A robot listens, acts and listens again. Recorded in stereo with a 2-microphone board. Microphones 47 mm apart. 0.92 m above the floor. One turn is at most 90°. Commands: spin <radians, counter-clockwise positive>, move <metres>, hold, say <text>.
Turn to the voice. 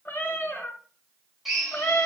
hold
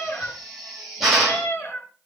hold
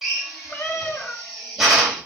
say I can't make out anyone speaking to turn to.